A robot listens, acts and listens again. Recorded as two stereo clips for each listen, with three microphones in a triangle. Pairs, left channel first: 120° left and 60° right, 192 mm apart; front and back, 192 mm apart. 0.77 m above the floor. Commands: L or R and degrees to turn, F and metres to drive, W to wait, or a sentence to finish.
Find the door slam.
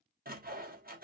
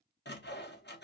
W
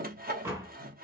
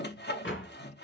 L15
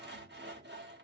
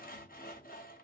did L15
Facing where the door slam came from. I can't hear it now.